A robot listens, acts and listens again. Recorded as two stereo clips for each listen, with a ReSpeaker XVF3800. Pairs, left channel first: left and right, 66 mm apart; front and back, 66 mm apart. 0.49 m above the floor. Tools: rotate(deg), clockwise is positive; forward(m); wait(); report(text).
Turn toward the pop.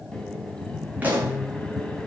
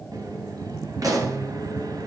rotate(155)
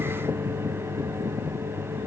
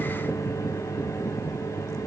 report("Facing where the pop came from. I can't hear it now.")